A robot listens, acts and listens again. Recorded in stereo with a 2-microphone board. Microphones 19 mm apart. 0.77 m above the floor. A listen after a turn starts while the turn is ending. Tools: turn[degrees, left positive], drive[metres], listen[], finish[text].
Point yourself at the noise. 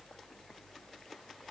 Action: listen[]
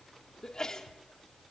Thought: The sneeze: about 30° left or 150° left.
Action: turn[30]
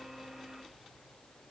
Action: listen[]
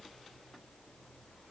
Action: finish[I heard a sneeze, but can't make it out now. It was about straight ahead or 120° left.]